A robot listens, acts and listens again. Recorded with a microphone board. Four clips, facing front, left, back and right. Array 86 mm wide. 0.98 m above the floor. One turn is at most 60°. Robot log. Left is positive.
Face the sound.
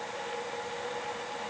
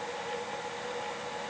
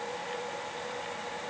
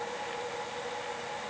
cmd idle
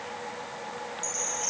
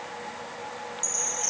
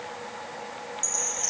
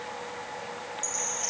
note: The chime: 155° right.
cmd yaw -60
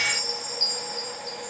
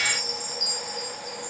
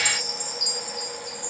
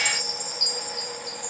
note: The chime is now 105° right.
cmd yaw -60
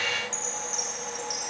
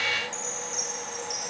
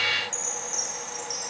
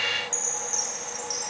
note: The chime is now 40° right.
cmd yaw -40
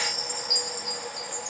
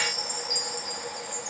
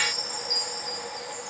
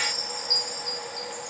note: The chime is now 20° right.
cmd yaw -20
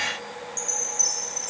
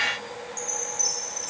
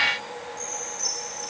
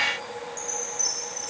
end: Facing the chime, over 4 m away.